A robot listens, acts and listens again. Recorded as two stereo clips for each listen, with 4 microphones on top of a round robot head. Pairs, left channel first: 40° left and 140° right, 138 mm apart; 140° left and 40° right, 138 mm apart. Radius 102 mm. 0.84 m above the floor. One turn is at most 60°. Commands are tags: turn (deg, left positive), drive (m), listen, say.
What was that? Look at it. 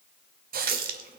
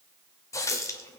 <turn deg="-60"/>
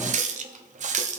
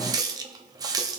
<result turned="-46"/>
<turn deg="-60"/>
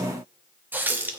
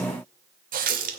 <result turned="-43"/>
<turn deg="-60"/>
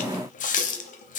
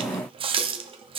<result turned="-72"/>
<turn deg="10"/>
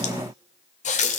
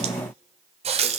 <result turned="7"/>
<say>Facing the running tap, under 1 m away.</say>